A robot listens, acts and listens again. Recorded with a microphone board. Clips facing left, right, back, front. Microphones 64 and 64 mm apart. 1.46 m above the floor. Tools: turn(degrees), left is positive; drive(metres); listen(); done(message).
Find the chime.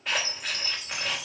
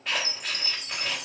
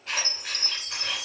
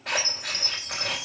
turn(degrees=-65)
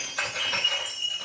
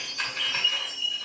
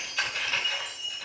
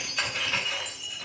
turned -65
turn(degrees=15)
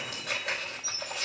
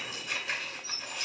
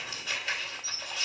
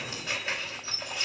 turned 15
done("Found it: a chime, straight ahead.")